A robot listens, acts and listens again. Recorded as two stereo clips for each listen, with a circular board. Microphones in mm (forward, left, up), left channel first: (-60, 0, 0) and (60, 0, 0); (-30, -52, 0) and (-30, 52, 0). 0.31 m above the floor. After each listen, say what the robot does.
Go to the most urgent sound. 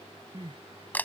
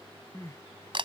Turn 35° right.
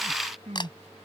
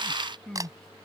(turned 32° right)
Drive 1.0 m forward.
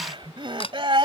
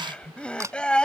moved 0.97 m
Turn 15° right.
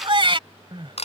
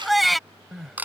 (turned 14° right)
Drive 1.0 m forward.
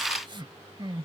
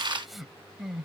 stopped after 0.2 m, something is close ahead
I am next to the crying.